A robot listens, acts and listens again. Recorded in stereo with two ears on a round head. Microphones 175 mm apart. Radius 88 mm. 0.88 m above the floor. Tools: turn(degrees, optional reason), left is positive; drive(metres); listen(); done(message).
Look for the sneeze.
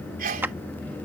turn(degrees=-45, reason="The sneeze: about 45° right or 135° right.")
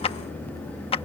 listen()
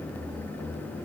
done("I heard a sneeze, but can't make it out now. It was about straight ahead or 90° right.")